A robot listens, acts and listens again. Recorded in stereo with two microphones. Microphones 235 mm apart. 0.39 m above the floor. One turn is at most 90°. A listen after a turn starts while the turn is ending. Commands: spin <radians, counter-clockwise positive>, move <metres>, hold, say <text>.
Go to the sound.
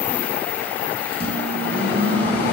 spin -0.70
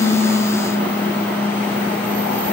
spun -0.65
move 1.0
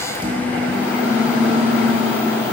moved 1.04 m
spin -0.17
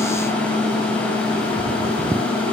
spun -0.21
move 1.0
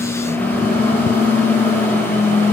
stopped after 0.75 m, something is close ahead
spin 0.26
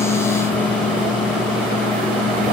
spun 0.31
say I am next to the microwave.